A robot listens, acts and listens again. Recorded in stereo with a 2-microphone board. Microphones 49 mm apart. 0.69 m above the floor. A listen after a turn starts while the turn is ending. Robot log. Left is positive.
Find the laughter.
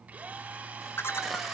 note: The laughter: about 60° left or 120° left.
cmd yaw +60
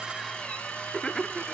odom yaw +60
note: So it is at 20° left.
cmd yaw +20
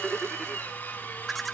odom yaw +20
end: Found it: laughter, straight ahead, 1 to 2 m away.